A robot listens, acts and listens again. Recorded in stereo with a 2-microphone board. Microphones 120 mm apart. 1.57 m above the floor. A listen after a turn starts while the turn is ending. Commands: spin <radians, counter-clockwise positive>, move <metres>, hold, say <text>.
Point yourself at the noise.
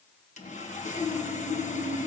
spin 1.57
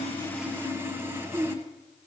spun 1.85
spin -0.35
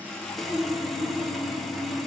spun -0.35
say Facing the sawing, 1 to 2 m away.